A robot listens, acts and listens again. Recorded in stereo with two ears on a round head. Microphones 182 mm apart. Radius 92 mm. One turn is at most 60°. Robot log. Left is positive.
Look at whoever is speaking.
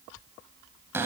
cmd idle
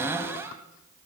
cmd idle
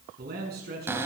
note: The man speaking: about 45° right or 135° right.
cmd yaw -45
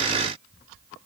cmd idle
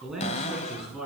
end: Facing the man speaking, over 4 m away.